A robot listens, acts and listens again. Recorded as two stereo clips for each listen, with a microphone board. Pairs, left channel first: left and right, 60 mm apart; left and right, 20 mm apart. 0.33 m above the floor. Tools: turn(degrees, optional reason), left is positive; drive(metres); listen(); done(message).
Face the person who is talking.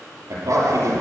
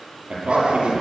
turn(degrees=-60, reason="The man speaking: about 60° right or 120° right.")
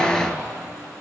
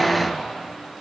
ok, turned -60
listen()
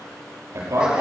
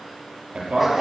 turn(degrees=-55, reason="So it is at 55° right.")
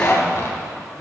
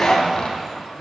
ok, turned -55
listen()
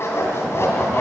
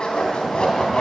listen()
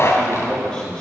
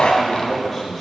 turn(degrees=15, reason="The man speaking is now 15° left.")
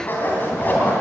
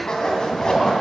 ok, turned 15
listen()
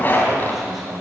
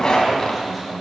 done("Facing the man speaking.")